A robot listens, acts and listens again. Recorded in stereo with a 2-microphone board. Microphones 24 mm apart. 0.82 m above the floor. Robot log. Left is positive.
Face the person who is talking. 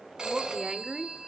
note: The woman speaking: about 30° right or 150° right.
cmd yaw -30
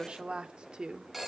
note: The woman speaking: about 40° right or 140° right.
cmd yaw -40
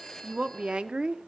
note: So it is at 135° right.
cmd yaw -135
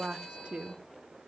note: The woman speaking is now 65° right.
cmd yaw -65
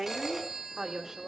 note: The woman speaking is now 25° right.
cmd yaw -25
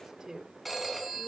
note: The woman speaking is now 30° right.
cmd yaw -30
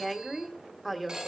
end: Found it: a woman speaking, straight ahead.